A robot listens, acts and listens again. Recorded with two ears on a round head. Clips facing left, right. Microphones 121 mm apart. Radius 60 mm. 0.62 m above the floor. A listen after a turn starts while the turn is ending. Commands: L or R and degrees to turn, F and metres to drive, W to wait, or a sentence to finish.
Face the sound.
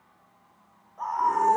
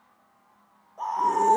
R30
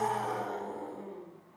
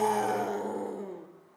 R115
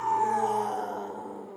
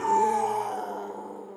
Found it: a scream, straight ahead.